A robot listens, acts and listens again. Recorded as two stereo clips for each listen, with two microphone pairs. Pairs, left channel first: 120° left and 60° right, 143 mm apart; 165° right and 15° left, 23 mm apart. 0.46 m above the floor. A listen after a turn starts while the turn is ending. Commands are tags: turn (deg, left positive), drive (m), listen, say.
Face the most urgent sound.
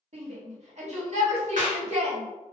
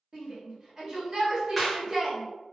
<turn deg="-40"/>
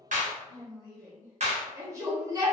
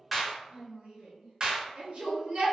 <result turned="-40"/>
<say>Found it: a shout, straight ahead, 1 to 2 m away.</say>